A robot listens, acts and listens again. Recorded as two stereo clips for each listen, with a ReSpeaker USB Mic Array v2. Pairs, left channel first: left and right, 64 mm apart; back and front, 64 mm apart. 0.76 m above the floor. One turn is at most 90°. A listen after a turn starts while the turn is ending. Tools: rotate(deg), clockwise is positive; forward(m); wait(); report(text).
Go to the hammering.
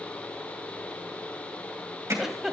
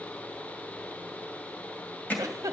rotate(90)
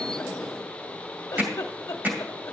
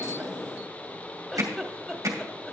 rotate(30)
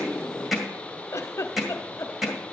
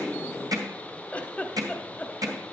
forward(1.0)
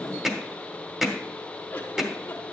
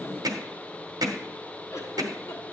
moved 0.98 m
forward(1.0)
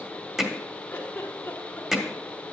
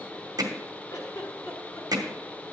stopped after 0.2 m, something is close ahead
report("I am next to the hammering.")